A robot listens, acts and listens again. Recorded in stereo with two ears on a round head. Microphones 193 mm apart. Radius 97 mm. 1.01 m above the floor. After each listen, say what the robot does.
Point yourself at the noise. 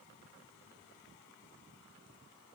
Keep listening.
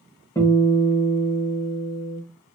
Turn 15° left.
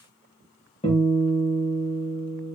Turn 150° left.
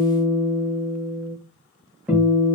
Found it: a guitar, straight ahead, 1 to 2 m away.